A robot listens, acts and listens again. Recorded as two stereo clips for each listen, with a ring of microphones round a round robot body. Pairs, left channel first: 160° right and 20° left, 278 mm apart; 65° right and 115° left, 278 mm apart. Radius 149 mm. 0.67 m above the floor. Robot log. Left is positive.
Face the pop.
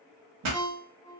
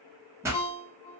note: The pop: 30° left.
cmd yaw +30
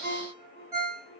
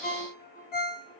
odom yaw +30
end: I heard a pop from this way, but can't make it out now.